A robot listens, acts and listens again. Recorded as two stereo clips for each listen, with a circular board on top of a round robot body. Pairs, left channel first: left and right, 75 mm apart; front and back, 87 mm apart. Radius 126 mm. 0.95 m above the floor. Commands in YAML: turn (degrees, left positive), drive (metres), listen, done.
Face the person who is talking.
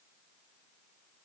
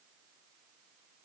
listen: true
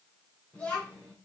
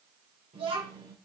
turn: 165
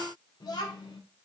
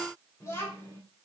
turn: 60
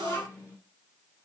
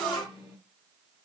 turn: 30
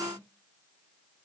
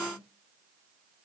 listen: true
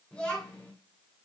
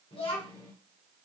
turn: 10
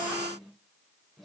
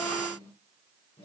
done: "Facing the child speaking."